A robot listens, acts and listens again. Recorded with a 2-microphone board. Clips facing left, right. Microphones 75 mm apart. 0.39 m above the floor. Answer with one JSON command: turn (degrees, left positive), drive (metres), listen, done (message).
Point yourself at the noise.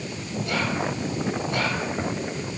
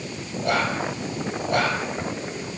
{"turn": -55}
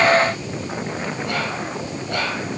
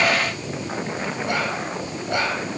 {"turn": -25}
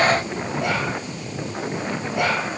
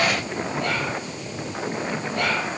{"turn": 10}
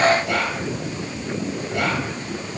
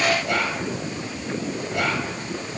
{"done": "Facing the whispering."}